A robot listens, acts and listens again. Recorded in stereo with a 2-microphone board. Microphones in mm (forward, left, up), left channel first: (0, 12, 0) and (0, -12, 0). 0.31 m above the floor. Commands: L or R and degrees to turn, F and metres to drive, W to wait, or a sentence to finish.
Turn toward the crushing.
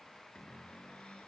W
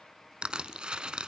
R45
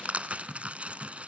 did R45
R85
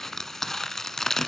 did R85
L20
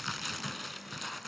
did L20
Found it: crushing, straight ahead, 1 to 2 m away.